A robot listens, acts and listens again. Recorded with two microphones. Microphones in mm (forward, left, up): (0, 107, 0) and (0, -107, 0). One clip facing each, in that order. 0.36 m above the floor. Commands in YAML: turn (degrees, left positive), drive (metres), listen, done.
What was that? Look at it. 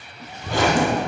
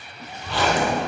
turn: 45
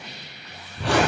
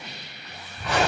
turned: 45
turn: 95
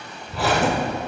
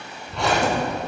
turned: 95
done: "Found it: a zipper, straight ahead."